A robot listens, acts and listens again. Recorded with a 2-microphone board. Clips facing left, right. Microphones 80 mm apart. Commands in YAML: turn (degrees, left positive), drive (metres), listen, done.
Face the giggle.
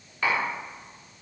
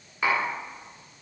listen: true
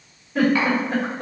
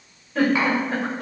turn: 30
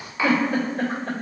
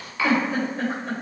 turn: 120
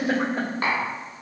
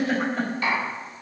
turn: 10
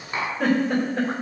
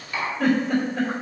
done: "Found it: a giggle, straight ahead."